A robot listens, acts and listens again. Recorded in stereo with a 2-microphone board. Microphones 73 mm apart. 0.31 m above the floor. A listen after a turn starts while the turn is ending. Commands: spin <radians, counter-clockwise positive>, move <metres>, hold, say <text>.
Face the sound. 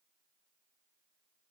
hold
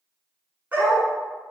spin -0.44
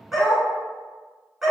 say Facing the dog barking, 1 to 2 m away.